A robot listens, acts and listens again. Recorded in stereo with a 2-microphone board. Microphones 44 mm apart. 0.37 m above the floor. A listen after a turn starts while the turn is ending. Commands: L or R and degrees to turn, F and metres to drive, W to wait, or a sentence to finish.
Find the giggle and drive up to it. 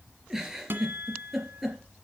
R30
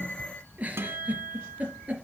R145
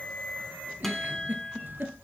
R45
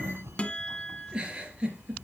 R20
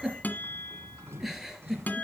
F1.0
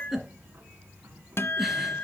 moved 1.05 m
F1.0
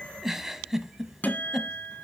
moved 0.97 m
R10
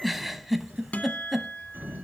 F1.0
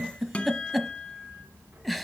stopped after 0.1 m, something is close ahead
Arrived at the giggle, straight ahead.